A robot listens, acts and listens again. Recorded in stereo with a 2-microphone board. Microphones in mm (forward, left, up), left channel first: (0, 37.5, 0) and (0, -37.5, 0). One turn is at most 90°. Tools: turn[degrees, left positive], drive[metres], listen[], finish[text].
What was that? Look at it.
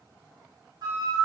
Thought: The flute: about 55° right or 125° right.
Action: turn[-55]
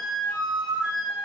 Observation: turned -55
Thought: So it is at 10° right.
Action: turn[-10]
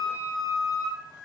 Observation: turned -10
Action: finish[Facing the flute.]